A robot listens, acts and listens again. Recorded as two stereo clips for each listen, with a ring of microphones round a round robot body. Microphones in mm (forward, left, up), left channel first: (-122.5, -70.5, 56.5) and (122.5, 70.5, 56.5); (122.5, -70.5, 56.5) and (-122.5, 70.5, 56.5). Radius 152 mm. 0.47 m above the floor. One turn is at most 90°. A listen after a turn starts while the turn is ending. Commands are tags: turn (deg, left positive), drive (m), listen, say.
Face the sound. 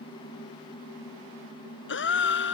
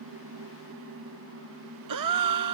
<turn deg="90"/>
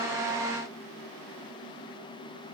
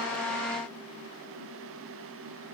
<turn deg="70"/>
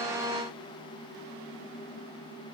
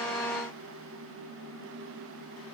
<say>Facing where the gasp came from. I can't hear it now.</say>